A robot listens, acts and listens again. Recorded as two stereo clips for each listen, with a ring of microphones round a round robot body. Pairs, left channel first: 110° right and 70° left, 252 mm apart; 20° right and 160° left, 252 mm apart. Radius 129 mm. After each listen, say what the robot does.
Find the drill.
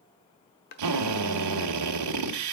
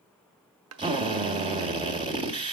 Turn 85° left.
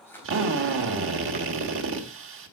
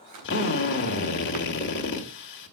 Turn 25° left.
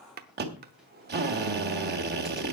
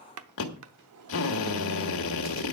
Turn 15° left.
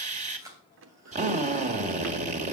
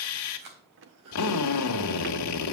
Found it: a drill, straight ahead, 1 to 2 m away.